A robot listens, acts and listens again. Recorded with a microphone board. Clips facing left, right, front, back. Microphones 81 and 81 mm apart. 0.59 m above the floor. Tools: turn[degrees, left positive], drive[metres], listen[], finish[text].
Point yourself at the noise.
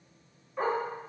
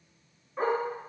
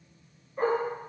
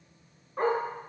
Thought: The dog barking: 170° right.
Action: turn[-170]
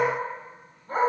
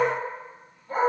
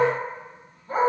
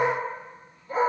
Thought: The dog barking is now 40° left.
Action: turn[40]
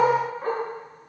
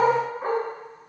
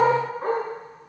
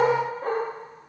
Thought: The dog barking is now 15° right.
Action: turn[-15]
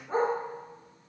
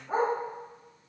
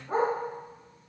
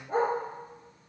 Action: finish[Facing the dog barking.]